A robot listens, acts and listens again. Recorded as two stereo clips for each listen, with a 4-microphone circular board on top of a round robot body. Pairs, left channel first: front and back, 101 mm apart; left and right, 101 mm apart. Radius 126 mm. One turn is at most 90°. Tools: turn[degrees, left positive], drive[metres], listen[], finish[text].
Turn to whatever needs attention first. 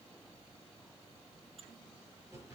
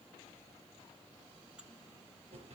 Action: listen[]
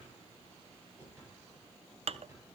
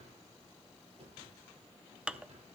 Action: listen[]
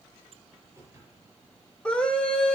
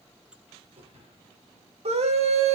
Thought: The scream: 80° right.
Action: turn[-80]
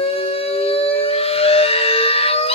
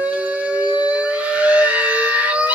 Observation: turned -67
Thought: The scream is now 15° right.
Action: turn[-15]
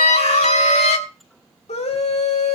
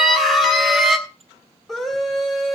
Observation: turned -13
Action: finish[Found it: a scream, straight ahead, 2 to 4 m away.]